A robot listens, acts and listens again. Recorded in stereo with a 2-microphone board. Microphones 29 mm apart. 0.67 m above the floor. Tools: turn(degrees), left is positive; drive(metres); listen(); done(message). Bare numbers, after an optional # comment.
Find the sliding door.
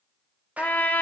listen()
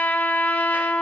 listen()
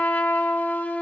done("I can't make out a sliding door, only a trumpet.")